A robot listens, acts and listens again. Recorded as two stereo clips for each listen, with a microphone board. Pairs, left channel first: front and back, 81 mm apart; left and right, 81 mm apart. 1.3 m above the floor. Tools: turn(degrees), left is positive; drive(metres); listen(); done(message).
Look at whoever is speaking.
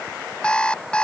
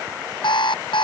listen()
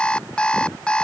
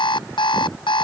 listen()
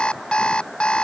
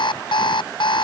done("I can't make out anyone speaking, only an alarm clock.")